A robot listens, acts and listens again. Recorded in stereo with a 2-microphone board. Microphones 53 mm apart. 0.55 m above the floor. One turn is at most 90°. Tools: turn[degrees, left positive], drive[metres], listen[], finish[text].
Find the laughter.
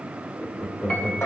Thought: The laughter: about 55° left or 125° left.
Action: turn[55]
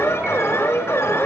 Action: listen[]
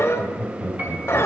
Thought: So it is at 35° left.
Action: turn[35]
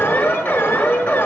Action: listen[]
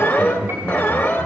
Thought: The laughter is now 15° left.
Action: turn[15]
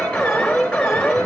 Action: listen[]
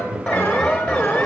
Action: finish[Found it: laughter, straight ahead.]